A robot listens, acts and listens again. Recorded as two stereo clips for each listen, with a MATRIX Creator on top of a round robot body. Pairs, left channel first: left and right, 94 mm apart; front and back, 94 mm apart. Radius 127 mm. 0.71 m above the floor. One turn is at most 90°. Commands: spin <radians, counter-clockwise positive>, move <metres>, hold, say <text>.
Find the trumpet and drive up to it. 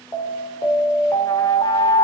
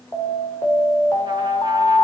hold
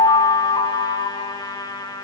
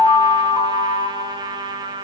spin 1.57
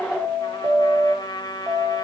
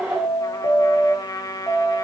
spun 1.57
spin 0.87
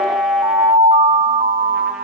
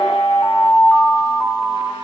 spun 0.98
spin -0.17
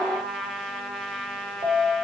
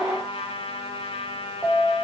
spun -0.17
move 1.0
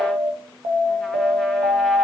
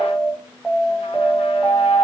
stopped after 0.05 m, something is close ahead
hold
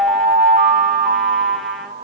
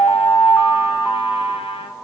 hold
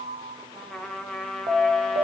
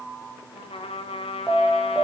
say Blocked. The trumpet is further on, straight ahead.